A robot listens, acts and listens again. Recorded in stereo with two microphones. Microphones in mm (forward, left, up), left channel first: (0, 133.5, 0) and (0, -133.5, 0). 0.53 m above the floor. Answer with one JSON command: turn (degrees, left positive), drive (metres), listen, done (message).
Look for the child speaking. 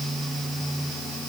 {"listen": true}
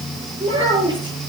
{"turn": -15}
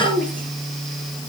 {"turn": -30}
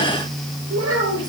{"turn": -120}
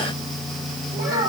{"turn": -40}
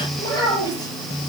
{"turn": 15}
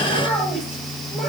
{"done": "Found it: a child speaking, straight ahead."}